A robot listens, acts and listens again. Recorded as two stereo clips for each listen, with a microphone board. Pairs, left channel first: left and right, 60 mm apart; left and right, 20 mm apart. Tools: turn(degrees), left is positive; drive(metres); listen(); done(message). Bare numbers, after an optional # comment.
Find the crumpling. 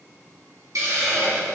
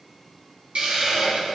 listen()
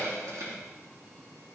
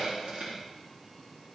listen()
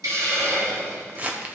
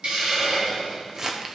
# The crumpling: about 25° right or 155° right.
turn(-25)
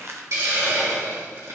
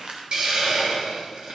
# So it is at 130° right.
turn(-130)
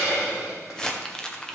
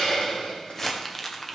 # The crumpling is now 10° left.
turn(10)
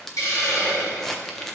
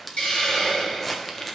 done("Facing the crumpling, 1 to 2 m away.")